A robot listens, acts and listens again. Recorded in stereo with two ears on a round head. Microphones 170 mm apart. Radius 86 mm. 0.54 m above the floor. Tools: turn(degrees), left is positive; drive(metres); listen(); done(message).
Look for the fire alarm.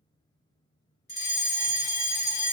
turn(degrees=35)
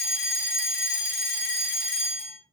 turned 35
turn(degrees=100)
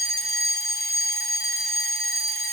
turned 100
turn(degrees=15)
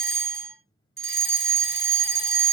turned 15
done("Found it: a fire alarm, straight ahead.")